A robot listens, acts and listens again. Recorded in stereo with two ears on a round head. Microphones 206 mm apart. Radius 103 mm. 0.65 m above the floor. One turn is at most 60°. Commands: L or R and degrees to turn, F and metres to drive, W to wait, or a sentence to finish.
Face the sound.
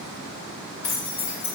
L60
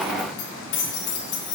L60
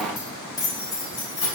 L20
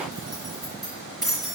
Found it: keys jangling, straight ahead, 2 to 4 m away.